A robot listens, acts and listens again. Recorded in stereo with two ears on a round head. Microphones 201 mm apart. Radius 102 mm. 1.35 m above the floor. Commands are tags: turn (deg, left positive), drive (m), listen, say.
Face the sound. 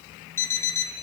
<turn deg="30"/>
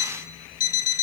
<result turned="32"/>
<turn deg="135"/>
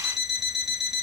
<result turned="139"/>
<say>Facing the alarm clock, 1 to 2 m away.</say>